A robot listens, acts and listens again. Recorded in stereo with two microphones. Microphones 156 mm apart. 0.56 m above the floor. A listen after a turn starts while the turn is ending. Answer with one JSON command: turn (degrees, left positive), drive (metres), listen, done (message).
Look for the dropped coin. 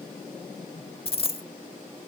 {"turn": 40}
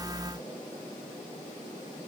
{"listen": true}
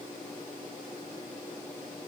{"done": "I heard a dropped coin, but can't make it out now. It was about straight ahead or 100° left."}